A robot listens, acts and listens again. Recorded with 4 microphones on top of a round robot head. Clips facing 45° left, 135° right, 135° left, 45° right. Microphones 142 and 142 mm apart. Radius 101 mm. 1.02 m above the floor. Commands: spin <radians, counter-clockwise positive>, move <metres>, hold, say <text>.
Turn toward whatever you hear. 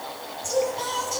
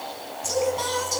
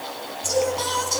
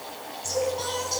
spin 2.97
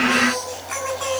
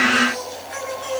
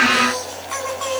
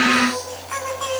spin 0.70
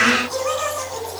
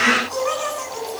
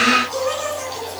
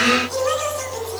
spin -0.17
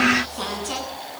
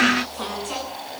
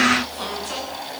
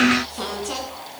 say Facing the singing.